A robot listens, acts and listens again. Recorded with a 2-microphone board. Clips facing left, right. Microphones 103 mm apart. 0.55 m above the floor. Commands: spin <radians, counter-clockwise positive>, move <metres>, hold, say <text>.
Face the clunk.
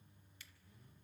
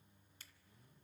hold
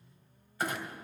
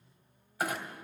spin -0.52
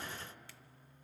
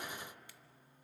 hold
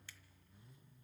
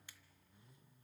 say I heard a clunk, but can't make it out now. It was about 20° left or 140° right.